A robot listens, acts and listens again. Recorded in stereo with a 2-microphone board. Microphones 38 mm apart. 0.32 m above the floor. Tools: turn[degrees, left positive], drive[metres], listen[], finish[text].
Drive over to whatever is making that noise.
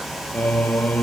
Thought: The singing: about 45° left or 135° left.
Action: turn[45]
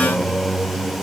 Action: drive[1.0]
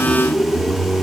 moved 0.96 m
Action: drive[1.0]
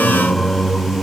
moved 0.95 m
Thought: The singing is now 10° left.
Action: turn[10]
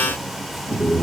Action: drive[1.0]
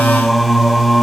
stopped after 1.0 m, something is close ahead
Action: finish[Arrived at the singing, straight ahead.]